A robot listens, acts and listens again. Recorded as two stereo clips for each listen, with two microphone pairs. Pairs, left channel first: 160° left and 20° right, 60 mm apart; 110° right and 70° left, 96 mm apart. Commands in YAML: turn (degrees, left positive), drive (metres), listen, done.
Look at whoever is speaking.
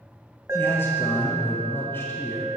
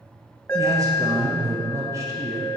turn: 120
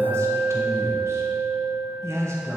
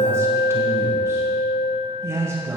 turn: 10
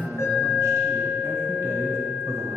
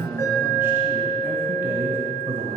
done: "Facing the man speaking, 1 to 2 m away."